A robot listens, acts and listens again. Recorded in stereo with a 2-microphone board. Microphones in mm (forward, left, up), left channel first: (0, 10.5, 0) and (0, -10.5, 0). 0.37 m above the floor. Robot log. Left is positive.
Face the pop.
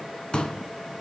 note: The pop: about 45° left or 135° left.
cmd yaw +45
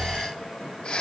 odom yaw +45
cmd idle
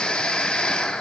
end: I heard a pop, but can't make it out now. It was about straight ahead or 90° left.